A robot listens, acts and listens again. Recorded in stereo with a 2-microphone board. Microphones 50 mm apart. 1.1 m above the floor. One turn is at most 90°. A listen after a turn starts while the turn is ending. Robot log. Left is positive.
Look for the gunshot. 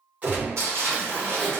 note: The gunshot: about 35° right or 145° right.
cmd yaw -35
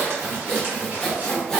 cmd idle
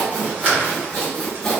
end: I heard a gunshot, but can't make it out now. It was about straight ahead or 110° right.